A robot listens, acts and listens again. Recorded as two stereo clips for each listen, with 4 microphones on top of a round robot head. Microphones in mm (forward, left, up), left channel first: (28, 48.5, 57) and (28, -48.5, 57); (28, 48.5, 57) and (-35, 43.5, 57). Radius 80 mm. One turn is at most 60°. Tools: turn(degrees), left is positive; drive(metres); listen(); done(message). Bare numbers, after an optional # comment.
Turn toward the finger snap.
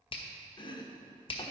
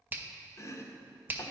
# The finger snap: 120° left.
turn(60)
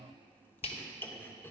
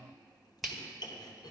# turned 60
# The finger snap is now 95° left.
turn(60)
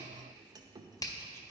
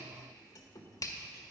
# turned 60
# The finger snap is now 35° left.
turn(35)
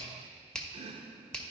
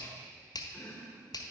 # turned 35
# The finger snap is now 10° left.
turn(10)
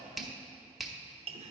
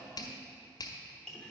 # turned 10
done("Found it: a finger snap, straight ahead, under 1 m away.")